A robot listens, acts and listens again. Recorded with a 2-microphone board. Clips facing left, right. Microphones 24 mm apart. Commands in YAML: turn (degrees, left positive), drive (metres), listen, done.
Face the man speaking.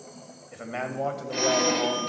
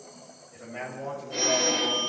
turn: 60
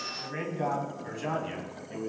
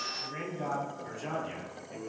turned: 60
turn: 25
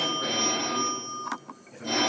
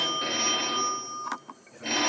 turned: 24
done: "Found it: a man speaking, straight ahead, 2 to 4 m away."